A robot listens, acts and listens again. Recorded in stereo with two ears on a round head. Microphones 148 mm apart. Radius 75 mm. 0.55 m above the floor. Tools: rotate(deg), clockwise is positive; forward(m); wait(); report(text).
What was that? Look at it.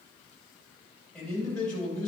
rotate(-30)
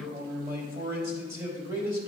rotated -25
rotate(20)
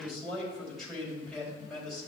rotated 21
report("Found it: a man speaking, straight ahead, 2 to 4 m away.")